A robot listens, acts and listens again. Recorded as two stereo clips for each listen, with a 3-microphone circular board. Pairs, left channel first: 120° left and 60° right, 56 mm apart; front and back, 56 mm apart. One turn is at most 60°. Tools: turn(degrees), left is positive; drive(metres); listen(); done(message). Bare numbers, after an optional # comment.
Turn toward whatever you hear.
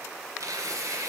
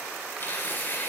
# The tearing paper: 55° right.
turn(-55)
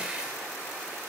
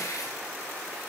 listen()
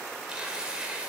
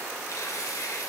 # The tearing paper is now 15° left.
turn(15)
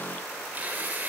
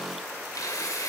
done("Found it: tearing paper, straight ahead, 2 to 4 m away.")